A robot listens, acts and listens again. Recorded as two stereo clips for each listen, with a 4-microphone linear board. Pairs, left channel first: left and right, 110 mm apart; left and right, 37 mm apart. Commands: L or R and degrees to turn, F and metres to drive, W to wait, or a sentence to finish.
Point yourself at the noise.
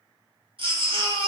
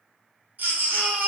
R50
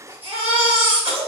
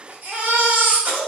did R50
R70
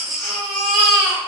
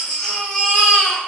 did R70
Found it: a baby crying, straight ahead.